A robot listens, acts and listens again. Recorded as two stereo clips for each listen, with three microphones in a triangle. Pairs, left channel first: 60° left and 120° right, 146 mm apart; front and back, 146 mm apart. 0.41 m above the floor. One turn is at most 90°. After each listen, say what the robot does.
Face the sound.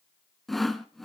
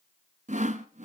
Turn 90° left.
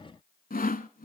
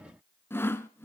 Turn 75° left.
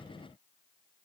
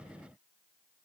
Keep listening.
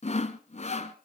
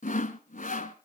Turn 25° left.
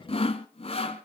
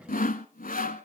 Turn 15° left.
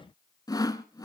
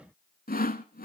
Facing the sawing.